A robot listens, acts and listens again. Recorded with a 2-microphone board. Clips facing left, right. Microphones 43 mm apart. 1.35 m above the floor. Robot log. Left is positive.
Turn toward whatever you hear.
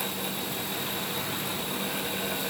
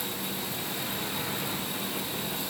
cmd idle
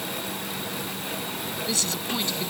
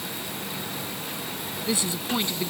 note: The woman speaking: about 20° right or 160° right.
cmd yaw -20
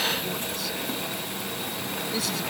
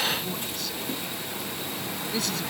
end: Found it: a woman speaking, straight ahead.